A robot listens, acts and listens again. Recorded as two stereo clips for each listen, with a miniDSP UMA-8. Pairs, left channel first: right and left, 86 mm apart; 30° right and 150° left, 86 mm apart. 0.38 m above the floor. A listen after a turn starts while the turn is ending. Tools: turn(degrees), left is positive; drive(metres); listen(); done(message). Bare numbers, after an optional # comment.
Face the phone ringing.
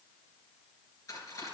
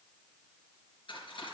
listen()
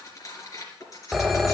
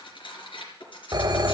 # The phone ringing: straight behind.
turn(180)
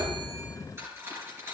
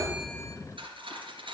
listen()
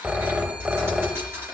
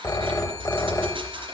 # The phone ringing is now 15° left.
turn(15)
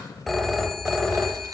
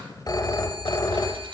done("Found it: a phone ringing, straight ahead.")